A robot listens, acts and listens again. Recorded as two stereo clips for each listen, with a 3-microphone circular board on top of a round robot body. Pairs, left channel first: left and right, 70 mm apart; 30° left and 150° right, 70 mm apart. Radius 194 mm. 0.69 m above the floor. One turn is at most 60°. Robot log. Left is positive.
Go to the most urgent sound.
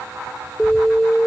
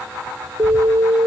note: The alarm: 170° left.
cmd yaw +60
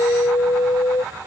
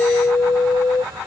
note: The alarm is now 80° left.
cmd yaw +60
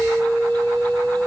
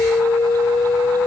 cmd fwd 1.0
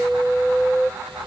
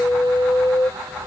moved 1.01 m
cmd fwd 1.0
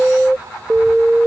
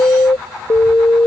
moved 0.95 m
cmd fwd 1.0
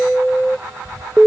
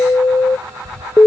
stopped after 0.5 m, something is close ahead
end: Arrived at the alarm, straight ahead.